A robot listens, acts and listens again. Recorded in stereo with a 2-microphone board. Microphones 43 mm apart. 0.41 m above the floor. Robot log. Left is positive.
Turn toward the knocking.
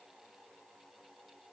cmd idle
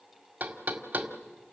note: The knocking: about 40° right or 140° right.
cmd yaw -40
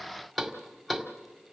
end: Found it: knocking, straight ahead.